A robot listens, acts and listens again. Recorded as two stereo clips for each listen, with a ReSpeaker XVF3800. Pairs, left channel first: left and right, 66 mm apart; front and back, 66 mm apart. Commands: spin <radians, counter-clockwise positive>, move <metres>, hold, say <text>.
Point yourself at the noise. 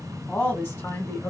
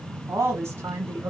spin 2.27
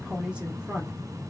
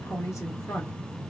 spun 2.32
spin -0.44
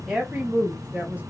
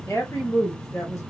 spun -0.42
spin -0.52
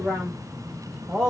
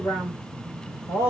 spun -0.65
spin -0.17
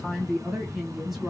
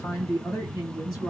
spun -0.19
say Found it: a woman speaking, straight ahead, 1 to 2 m away.